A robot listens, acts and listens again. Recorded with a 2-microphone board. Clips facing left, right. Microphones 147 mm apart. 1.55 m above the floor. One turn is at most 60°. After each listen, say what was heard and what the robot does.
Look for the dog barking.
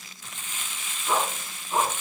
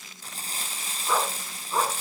The dog barking: about 15° left or 165° left. Turn 15° left.
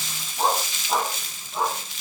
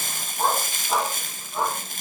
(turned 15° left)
Turn 30° left.
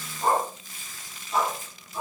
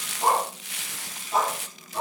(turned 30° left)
So it is at 35° right. Turn 35° right.
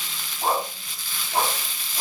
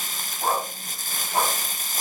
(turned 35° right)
Found it: a dog barking, straight ahead, over 4 m away.